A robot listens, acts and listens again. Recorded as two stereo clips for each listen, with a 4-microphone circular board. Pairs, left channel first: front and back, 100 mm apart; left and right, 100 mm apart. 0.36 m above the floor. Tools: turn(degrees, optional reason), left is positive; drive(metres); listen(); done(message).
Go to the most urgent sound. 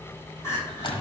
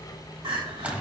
turn(degrees=-65, reason="The crying: 65° right.")
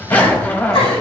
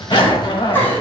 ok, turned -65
turn(degrees=20, reason="The crying is now 20° left.")
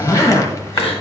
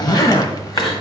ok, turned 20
drive(metres=1.0)
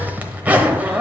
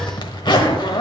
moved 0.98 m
listen()
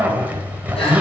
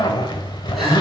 listen()
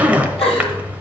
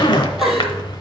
drive(metres=1.0)
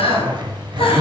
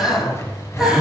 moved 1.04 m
drive(metres=1.0)
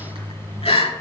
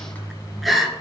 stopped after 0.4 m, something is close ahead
done("I am next to the crying.")